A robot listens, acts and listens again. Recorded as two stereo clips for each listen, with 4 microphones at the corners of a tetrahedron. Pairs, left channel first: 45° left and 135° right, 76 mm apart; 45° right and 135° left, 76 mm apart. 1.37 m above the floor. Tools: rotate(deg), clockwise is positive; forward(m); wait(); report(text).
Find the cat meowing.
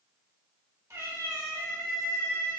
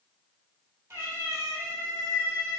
rotate(165)
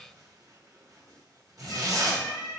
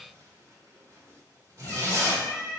rotate(-15)
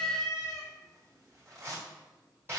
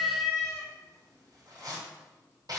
report("Found it: a cat meowing, straight ahead.")